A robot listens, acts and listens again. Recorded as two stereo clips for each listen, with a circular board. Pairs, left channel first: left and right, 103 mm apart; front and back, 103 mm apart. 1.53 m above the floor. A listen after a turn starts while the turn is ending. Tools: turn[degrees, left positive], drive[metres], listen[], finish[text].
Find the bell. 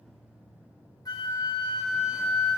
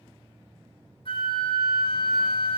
Action: listen[]
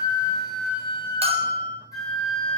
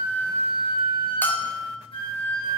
Thought: The bell: 75° right.
Action: turn[-75]
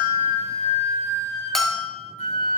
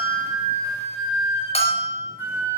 Action: finish[Facing the bell.]